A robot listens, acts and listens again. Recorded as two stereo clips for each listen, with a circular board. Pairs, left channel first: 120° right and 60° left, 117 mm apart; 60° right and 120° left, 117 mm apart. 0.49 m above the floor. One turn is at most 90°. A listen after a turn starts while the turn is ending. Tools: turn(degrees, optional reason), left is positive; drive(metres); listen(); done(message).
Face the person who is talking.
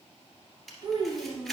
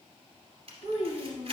turn(degrees=90, reason="The child speaking: 115° left.")
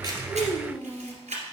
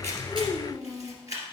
turn(degrees=25, reason="The child speaking is now 25° left.")
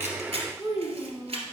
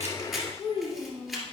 done("Found it: a child speaking, straight ahead.")